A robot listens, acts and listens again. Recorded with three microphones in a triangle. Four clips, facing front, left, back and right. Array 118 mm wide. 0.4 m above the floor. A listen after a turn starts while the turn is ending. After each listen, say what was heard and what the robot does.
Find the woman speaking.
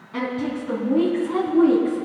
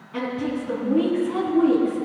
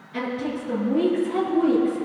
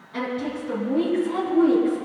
The woman speaking: 20° left. Turn 20° left.
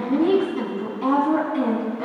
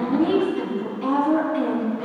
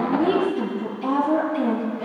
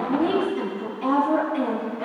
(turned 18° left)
Found it: a woman speaking, straight ahead.